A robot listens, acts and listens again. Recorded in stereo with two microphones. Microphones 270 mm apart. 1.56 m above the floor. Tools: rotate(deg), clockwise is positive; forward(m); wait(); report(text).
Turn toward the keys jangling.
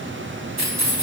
rotate(90)
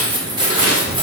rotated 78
rotate(20)
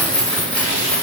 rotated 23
report("Found it: keys jangling, straight ahead.")